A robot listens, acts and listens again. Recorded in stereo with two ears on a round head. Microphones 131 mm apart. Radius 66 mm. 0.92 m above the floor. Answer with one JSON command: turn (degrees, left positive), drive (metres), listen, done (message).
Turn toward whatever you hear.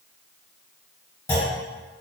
{"turn": 15}
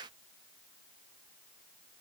{"listen": true}
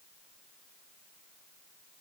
{"done": "I heard a clunk, but can't make it out now. It was about straight ahead or 150° left."}